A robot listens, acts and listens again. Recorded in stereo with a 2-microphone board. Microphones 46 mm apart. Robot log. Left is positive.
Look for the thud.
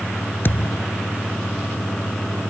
note: The thud: about 50° left or 130° left.
cmd yaw +50
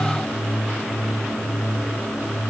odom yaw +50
cmd idle
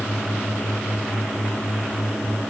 end: I heard a thud, but can't make it out now. It was about straight ahead or 80° left.